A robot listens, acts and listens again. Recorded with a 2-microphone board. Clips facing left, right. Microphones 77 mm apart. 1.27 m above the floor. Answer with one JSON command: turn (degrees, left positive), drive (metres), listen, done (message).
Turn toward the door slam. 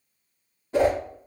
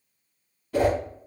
{"listen": true}
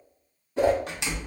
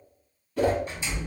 {"turn": 90}
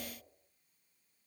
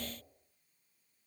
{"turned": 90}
{"done": "I heard a door slam from this way, but can't make it out now."}